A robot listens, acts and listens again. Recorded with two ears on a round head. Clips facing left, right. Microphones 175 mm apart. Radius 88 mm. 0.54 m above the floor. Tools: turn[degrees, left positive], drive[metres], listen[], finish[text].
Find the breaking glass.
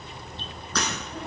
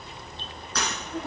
Thought: The breaking glass: about 60° left or 120° left.
Action: turn[60]
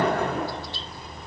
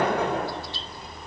Action: listen[]
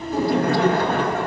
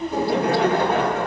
Action: finish[I heard breaking glass, but can't make it out now. It was about straight ahead or 60° left.]